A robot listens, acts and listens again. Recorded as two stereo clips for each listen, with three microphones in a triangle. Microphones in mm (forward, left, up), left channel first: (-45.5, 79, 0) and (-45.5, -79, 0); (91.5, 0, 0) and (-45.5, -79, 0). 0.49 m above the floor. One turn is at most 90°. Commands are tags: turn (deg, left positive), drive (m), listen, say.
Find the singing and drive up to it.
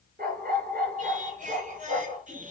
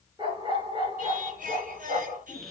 <turn deg="-90"/>
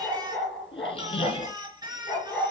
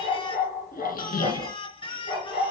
<turn deg="-30"/>
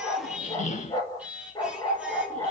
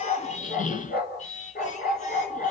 <turn deg="-10"/>
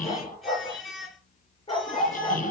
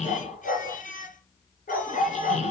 <drive m="1.0"/>
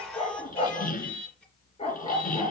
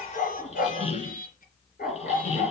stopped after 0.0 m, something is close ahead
<say>Something is in my way. I am facing the singing but have not reached it.</say>